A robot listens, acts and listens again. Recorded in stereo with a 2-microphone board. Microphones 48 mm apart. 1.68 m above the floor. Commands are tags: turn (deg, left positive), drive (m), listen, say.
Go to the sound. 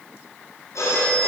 <turn deg="90"/>
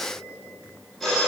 <drive m="1.0"/>
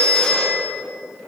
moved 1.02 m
<turn deg="10"/>
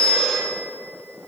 <drive m="1.0"/>
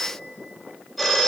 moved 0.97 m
<drive m="1.0"/>
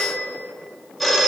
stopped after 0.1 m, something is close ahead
<say>I am next to the phone ringing.</say>